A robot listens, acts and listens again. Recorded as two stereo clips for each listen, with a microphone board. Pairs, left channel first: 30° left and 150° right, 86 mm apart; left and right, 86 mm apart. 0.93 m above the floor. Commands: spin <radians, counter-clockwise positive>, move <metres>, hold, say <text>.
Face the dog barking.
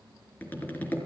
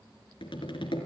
hold
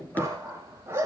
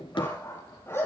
spin 2.62
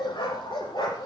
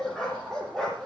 say Facing the dog barking, over 4 m away.